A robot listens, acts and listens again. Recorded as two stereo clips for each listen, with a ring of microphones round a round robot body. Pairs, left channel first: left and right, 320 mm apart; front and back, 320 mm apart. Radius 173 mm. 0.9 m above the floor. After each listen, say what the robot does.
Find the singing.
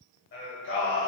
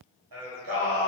Turn 150° left.
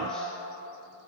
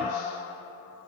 Found it: singing, straight ahead, 1 to 2 m away.